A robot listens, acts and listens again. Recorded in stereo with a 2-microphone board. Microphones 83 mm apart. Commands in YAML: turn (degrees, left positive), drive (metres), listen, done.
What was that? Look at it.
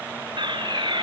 turn: -70
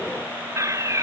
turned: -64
turn: -40
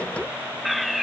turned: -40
done: "Found it: a fire alarm, straight ahead."